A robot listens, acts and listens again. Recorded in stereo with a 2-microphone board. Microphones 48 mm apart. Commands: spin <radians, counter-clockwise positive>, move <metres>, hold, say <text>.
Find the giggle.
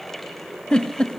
spin 0.44
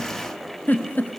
spin 2.27
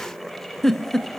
spin 0.17
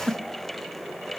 say Found it: a giggle, straight ahead, 1 to 2 m away.